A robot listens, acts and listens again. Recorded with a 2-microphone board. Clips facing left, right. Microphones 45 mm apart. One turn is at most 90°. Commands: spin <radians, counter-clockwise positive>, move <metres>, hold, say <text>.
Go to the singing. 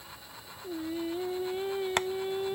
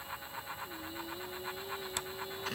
spin 1.05
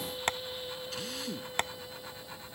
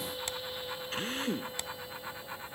move 1.0
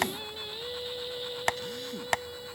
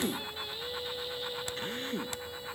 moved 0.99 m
spin 0.17
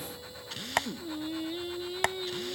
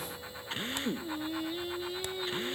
move 1.0
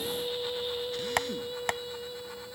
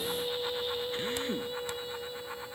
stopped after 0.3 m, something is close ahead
say I am next to the singing.